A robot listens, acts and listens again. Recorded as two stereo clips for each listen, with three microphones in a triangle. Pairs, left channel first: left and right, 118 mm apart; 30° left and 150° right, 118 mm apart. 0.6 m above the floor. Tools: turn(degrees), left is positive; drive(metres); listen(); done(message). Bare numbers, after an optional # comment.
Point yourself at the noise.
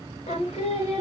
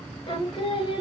# The singing: 65° left.
turn(65)
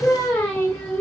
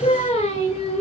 # The singing is now 20° left.
turn(20)
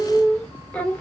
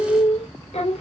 # The singing is now 15° left.
turn(15)
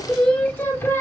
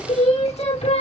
# The singing is now 25° left.
turn(25)
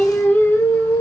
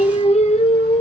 # The singing is now 30° left.
turn(30)
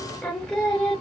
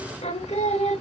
# The singing is now 10° left.
turn(10)
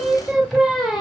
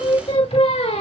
done("Found it: singing, straight ahead.")